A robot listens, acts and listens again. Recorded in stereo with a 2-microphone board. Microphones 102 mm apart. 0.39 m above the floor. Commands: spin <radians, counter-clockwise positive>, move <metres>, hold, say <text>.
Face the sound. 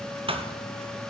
spin -1.13
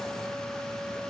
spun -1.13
hold
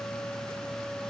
say I heard a thud, but can't make it out now. It was about straight ahead or 50° right.